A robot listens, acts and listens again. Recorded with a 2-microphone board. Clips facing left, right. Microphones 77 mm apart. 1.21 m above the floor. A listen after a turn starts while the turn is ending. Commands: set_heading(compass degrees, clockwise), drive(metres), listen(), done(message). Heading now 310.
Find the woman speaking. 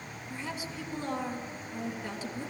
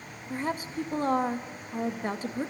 set_heading(355)
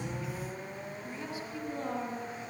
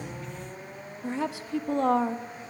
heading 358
set_heading(88)
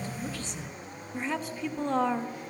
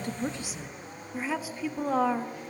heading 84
done("Facing the woman speaking.")